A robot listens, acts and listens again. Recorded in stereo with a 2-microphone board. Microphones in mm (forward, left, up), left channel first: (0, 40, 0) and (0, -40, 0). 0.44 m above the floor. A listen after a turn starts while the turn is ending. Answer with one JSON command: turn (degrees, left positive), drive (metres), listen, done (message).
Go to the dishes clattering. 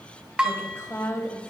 {"turn": -30}
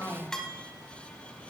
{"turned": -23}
{"turn": 10}
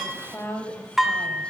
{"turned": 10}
{"drive": 1.0}
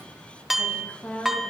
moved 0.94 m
{"drive": 1.0}
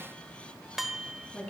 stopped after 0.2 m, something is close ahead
{"done": "I am next to the dishes clattering."}